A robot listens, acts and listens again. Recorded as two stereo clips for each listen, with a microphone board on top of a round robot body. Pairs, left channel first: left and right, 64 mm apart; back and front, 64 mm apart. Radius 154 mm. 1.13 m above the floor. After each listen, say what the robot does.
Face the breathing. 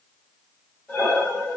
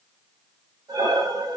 Turn 10° left.
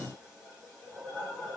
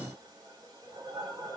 Found it: breathing, straight ahead, under 1 m away.